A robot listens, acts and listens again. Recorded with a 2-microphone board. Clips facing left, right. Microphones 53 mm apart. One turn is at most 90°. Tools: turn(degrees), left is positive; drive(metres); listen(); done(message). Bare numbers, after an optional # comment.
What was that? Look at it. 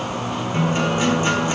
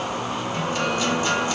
# The guitar: about 25° left or 155° left.
turn(25)
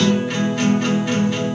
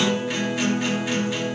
done("Facing the guitar.")